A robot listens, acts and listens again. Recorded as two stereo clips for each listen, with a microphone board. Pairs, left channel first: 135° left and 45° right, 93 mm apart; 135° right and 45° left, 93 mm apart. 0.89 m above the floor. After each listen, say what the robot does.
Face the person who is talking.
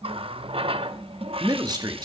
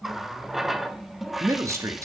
Turn 10° right.
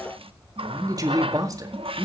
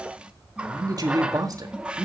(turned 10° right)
Facing the man speaking, 1 to 2 m away.